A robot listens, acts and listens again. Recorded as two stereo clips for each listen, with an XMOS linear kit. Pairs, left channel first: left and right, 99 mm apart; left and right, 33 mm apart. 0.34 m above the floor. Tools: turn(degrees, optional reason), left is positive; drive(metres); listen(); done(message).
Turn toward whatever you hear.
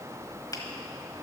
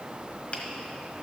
turn(degrees=40, reason="The finger snap: about 40° left or 140° left.")
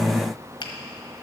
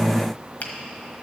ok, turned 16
turn(degrees=130, reason="So it is at 130° left.")
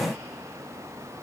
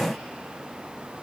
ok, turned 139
turn(degrees=-10, reason="Nothing new. It was at 10° right.")
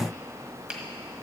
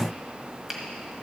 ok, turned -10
turn(degrees=-10, reason="The finger snap is now 10° right.")
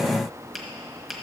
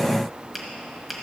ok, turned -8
done("Facing the finger snap, 1 to 2 m away.")